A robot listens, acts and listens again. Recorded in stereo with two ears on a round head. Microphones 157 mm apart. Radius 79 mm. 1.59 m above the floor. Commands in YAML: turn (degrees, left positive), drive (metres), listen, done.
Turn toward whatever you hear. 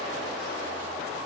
listen: true
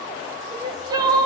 turn: -20
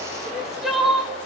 done: "Found it: crying, straight ahead."